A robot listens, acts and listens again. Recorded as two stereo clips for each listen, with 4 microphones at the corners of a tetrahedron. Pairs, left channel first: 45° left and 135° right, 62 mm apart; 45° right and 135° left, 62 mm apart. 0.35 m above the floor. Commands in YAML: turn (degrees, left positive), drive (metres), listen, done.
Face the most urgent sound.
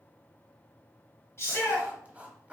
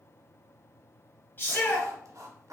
done: "Found it: a shout, straight ahead."